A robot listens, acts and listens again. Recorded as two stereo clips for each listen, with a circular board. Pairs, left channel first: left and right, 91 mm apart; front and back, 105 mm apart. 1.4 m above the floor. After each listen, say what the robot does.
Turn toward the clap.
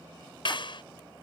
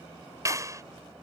Turn 120° left.
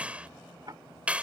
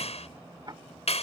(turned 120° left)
Turn 15° right.
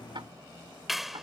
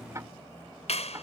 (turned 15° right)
Found it: a clap, straight ahead.